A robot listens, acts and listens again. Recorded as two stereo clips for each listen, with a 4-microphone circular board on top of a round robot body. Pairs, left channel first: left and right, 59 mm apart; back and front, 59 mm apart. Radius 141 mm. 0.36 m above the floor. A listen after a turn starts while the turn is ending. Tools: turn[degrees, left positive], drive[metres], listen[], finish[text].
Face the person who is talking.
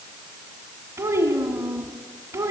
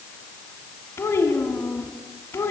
Thought: The child speaking: 135° right.
Action: turn[-135]
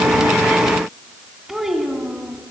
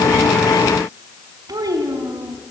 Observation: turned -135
Action: finish[Found it: a child speaking, straight ahead.]